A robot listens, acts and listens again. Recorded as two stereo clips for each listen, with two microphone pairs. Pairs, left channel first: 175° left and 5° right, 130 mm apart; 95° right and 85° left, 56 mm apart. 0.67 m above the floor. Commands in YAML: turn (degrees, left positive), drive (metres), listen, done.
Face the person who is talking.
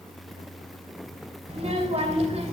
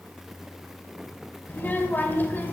turn: -40
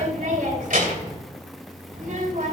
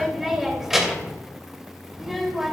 done: "Found it: a child speaking, straight ahead."